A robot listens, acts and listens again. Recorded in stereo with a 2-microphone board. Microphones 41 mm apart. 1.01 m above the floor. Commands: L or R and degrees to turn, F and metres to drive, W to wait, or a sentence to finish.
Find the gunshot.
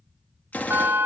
L40
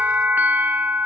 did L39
W
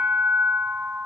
I heard a gunshot, but can't make it out now. It was about straight ahead or 105° left.